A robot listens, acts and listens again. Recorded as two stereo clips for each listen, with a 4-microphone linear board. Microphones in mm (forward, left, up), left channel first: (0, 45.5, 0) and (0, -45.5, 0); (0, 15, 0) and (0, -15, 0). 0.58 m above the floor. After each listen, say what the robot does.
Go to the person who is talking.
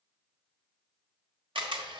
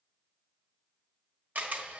Keep listening.
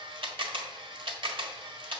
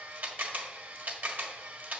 Keep listening.
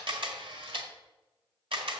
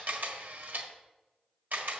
I can't make out anyone speaking, only a camera shutter.